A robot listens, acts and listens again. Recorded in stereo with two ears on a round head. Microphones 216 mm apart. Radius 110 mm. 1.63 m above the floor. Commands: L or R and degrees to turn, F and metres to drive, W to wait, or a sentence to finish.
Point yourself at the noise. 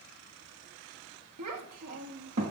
R60
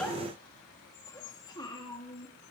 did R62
L25
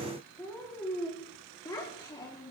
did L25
L15
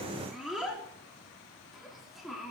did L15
Facing the child speaking, 2 to 4 m away.